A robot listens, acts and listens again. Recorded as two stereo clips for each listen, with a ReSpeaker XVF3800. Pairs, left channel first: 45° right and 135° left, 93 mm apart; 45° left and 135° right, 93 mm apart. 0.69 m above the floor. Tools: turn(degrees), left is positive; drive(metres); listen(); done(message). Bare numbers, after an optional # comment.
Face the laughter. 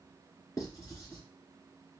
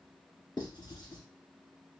listen()
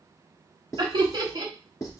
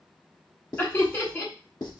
# The laughter: 105° left.
turn(105)
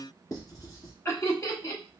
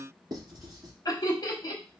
# The laughter is now 10° left.
turn(10)
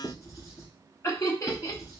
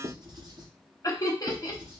done("Facing the laughter, 1 to 2 m away.")